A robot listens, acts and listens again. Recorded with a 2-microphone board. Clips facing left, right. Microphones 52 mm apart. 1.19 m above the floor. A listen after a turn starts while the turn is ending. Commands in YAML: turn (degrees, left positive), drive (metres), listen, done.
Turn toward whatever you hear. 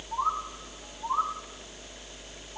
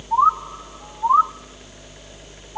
turn: -55
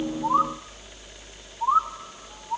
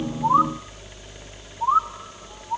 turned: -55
done: "Found it: a bird, straight ahead, under 1 m away."